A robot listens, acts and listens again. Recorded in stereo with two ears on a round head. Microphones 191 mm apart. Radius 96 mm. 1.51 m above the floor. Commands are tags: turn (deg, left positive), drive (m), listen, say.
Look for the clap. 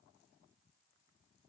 <listen/>
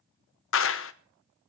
<turn deg="65"/>
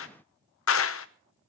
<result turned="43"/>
<turn deg="70"/>
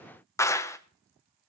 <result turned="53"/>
<turn deg="15"/>
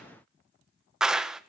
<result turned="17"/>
<say>Found it: a clap, straight ahead.</say>